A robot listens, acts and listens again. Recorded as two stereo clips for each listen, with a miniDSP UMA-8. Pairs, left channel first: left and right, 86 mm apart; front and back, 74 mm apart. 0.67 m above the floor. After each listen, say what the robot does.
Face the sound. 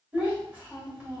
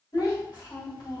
Turn 25° right.
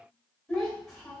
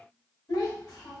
Facing the child speaking.